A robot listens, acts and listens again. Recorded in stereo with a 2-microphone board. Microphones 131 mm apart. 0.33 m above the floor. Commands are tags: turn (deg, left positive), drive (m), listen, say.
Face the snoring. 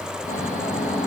<turn deg="90"/>
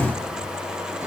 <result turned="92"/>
<listen/>
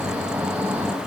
<turn deg="-15"/>
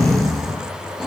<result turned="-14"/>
<say>Found it: snoring, straight ahead.</say>